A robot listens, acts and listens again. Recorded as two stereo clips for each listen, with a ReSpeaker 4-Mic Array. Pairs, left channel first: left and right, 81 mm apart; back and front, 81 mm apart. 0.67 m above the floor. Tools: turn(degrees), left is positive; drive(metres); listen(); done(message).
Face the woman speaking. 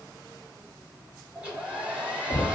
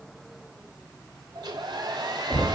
listen()
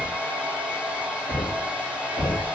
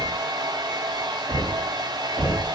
listen()
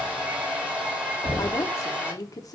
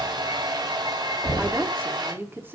turn(degrees=60)
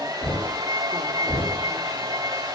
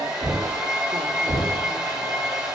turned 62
listen()
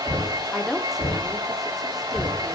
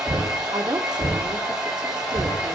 done("Facing the woman speaking.")